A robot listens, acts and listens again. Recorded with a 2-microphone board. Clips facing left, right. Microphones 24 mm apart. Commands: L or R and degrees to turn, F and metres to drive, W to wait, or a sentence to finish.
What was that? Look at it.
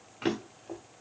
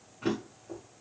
L55
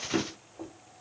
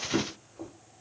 L10
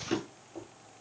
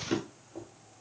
Facing the drawer, 1 to 2 m away.